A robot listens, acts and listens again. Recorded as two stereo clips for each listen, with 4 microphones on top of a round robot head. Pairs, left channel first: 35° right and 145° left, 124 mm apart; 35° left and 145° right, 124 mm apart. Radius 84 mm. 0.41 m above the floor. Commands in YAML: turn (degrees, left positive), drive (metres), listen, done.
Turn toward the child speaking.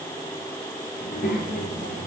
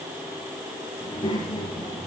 turn: -25
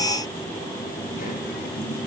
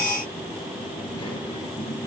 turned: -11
turn: -25
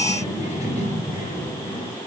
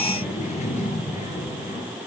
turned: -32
done: "Facing the child speaking, over 4 m away."